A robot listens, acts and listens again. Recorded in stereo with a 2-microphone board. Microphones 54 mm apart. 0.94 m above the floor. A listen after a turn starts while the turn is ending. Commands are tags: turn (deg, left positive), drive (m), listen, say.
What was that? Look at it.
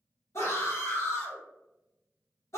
<turn deg="60"/>
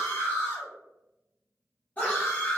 <turn deg="30"/>
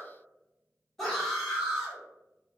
<say>Facing the scream.</say>